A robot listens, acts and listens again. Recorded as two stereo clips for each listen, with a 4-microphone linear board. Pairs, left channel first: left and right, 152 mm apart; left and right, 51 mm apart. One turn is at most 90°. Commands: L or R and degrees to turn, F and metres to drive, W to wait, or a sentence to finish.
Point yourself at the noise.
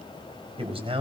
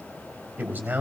R40
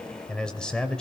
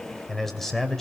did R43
Facing the man speaking.